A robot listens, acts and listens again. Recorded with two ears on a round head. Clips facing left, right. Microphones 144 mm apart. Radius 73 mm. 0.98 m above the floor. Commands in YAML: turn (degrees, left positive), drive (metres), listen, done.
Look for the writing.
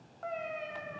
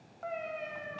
listen: true
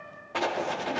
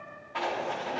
turn: 55
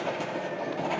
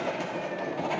done: "Found it: writing, straight ahead."